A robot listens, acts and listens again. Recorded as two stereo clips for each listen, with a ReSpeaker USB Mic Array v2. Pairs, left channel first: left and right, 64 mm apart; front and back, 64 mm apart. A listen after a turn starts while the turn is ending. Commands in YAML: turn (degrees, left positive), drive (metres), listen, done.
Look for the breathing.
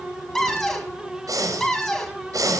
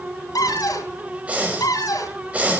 turn: -110
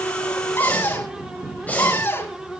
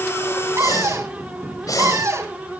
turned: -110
turn: 25
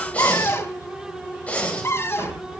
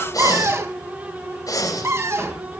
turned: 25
turn: 20
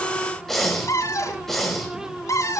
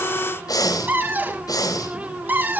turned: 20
done: "Facing the breathing, over 4 m away."